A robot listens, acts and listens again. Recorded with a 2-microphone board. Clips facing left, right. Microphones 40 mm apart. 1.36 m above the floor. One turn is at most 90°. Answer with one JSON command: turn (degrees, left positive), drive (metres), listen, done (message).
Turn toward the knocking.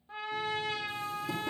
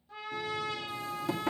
{"turn": -65}
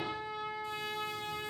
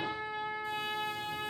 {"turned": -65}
{"listen": true}
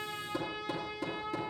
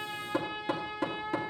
{"turn": -55}
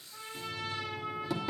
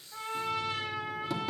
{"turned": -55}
{"done": "Facing the knocking, 2 to 4 m away."}